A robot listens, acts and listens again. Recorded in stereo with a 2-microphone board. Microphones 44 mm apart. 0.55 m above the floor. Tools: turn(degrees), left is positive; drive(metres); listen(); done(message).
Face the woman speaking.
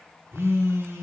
listen()
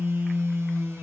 listen()
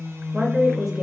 turn(degrees=-30)
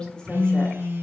listen()
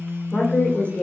turn(degrees=35)
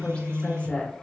turn(degrees=30)
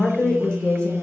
turn(degrees=25)
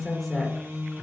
listen()
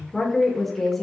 done("Found it: a woman speaking, straight ahead.")